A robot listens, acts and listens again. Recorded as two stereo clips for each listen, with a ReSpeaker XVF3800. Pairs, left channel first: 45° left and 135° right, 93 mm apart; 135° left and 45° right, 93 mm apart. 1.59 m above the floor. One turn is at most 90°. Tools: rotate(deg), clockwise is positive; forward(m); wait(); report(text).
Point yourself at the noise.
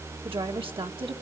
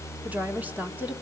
rotate(90)
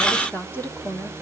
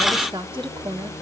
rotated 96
rotate(25)
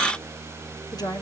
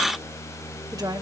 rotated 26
report("Facing the woman speaking.")